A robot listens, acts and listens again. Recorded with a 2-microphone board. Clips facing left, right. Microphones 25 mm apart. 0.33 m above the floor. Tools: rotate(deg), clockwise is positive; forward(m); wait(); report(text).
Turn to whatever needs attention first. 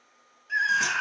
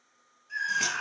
rotate(-40)
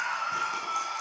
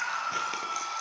report("Facing the scream.")